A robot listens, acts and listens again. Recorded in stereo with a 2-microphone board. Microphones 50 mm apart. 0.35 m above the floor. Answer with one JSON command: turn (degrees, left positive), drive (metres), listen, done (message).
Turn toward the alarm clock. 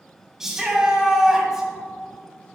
{"listen": true}
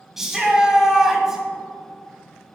{"listen": true}
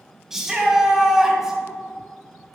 {"done": "I can't make out an alarm clock, only a shout."}